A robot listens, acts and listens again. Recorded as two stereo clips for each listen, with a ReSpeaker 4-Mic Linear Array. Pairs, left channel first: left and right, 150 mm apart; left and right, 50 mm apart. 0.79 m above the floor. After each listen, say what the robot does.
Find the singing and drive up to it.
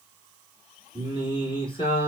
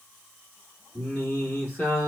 Turn 35° left.
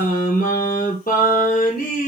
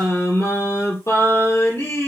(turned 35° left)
Turn 110° left.
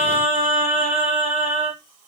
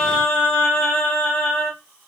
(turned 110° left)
Turn 40° left.
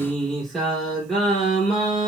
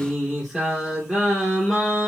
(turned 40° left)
Drive 1.0 m forward.
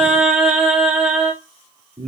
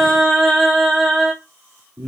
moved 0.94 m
Drive 1.0 m forward.
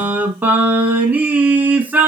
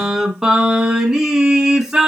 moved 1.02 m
Turn 10° right.
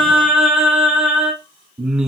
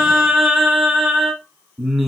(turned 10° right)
Drive 1.0 m forward.
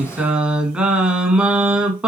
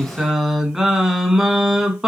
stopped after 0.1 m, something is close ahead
I am next to the singing.